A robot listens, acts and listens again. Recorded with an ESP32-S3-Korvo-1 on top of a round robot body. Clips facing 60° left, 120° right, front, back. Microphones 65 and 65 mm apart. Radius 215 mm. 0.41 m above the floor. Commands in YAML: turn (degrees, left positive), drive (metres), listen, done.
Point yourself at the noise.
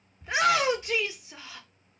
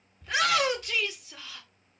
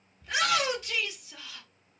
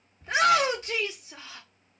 turn: 125
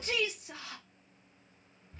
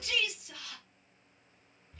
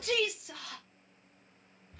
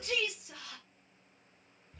turn: 10
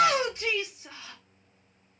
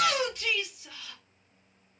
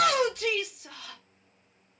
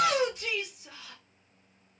done: "Found it: a shout, straight ahead."